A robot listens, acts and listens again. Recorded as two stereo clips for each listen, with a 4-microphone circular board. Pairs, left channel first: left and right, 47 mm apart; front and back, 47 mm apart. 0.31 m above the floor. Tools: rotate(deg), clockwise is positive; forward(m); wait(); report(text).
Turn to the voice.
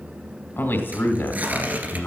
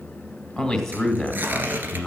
rotate(-80)
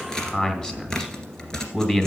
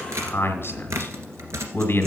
rotate(-20)
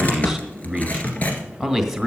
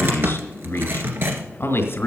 report("Found it: a man speaking, straight ahead, 2 to 4 m away.")